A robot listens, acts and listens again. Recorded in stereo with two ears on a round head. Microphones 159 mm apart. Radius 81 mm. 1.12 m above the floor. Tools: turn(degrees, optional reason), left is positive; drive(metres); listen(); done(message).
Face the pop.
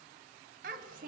listen()
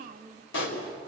turn(degrees=90)
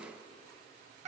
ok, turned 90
done("I heard a pop from this way, but can't make it out now.")